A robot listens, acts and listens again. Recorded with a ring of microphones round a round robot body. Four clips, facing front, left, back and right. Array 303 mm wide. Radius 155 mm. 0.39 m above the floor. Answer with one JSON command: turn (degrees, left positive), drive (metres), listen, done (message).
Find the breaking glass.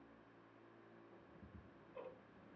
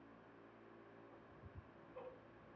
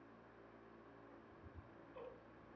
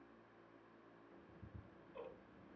{"listen": true}
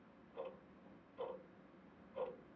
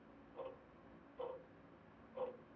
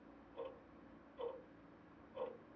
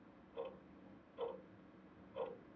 {"listen": true}
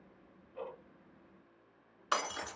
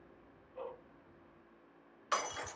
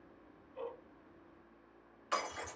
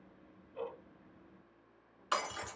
{"turn": -25}
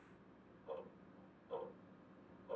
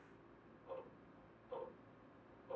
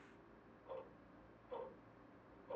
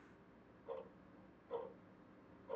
{"done": "I heard breaking glass from this way, but can't make it out now."}